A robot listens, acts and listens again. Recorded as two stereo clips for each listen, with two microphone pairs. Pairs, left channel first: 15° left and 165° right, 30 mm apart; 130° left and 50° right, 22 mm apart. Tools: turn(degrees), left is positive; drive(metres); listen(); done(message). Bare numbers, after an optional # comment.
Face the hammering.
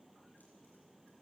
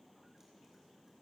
listen()
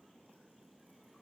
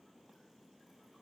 listen()
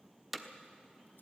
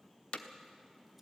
# The hammering: 110° left.
turn(110)
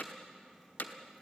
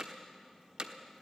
done("Facing the hammering.")